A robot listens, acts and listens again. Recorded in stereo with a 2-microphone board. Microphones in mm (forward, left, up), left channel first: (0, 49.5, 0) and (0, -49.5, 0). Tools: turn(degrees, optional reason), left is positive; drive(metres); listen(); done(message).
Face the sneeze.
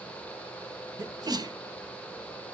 turn(degrees=-45, reason="The sneeze: about 45° right or 135° right.")
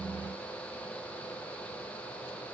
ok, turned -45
listen()
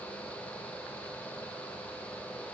done("I heard a sneeze, but can't make it out now. It was about straight ahead or 90° right.")